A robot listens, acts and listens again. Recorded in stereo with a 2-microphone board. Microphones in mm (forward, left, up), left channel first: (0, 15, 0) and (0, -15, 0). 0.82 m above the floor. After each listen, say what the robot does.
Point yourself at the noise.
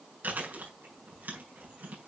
Turn 90° right.
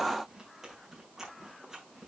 Turn 15° right.
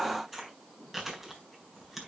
Found it: chewing, straight ahead.